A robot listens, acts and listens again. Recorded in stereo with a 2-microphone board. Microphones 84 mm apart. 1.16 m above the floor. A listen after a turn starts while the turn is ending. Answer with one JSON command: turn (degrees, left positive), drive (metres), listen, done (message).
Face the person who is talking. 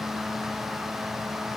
{"listen": true}
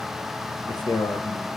{"turn": 55}
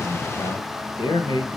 {"turn": 65}
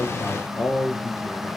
{"turn": 30}
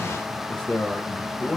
{"turn": 15}
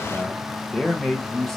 {"done": "Facing the man speaking."}